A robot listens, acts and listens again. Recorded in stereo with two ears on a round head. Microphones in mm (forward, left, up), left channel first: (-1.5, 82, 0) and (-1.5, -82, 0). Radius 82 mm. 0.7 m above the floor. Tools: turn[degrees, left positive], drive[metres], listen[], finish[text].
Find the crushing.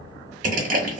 Thought: The crushing: about 50° right or 130° right.
Action: turn[-50]
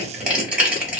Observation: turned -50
Thought: So it is at 10° right.
Action: turn[-10]
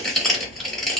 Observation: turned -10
Action: finish[Found it: crushing, straight ahead, 1 to 2 m away.]